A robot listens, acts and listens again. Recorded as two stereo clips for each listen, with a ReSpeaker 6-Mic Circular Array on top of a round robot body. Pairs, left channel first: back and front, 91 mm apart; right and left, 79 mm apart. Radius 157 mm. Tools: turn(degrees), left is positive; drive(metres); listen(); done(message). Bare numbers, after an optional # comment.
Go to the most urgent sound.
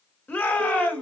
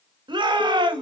# The shout: 110° left.
turn(110)
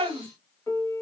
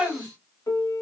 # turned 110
# The shout is now 20° left.
turn(20)
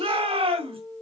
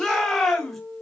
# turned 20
drive(1.0)
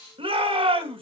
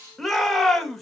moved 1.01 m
drive(1.0)
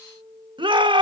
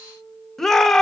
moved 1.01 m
drive(1.0)
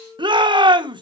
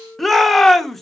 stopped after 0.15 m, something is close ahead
done("Arrived at the shout, straight ahead.")